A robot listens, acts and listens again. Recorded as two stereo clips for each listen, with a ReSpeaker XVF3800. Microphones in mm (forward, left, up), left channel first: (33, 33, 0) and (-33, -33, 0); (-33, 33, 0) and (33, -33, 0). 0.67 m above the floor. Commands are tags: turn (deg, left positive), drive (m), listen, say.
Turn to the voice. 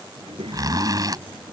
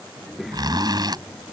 <turn deg="-130"/>
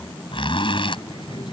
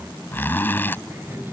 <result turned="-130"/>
<turn deg="20"/>
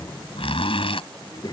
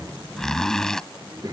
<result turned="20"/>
<say>Found it: a child speaking, straight ahead.</say>